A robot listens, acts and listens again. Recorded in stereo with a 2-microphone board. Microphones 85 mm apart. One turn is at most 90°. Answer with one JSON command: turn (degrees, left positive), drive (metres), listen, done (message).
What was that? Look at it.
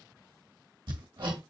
{"turn": -70}
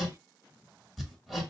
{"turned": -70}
{"done": "Found it: hammering, straight ahead."}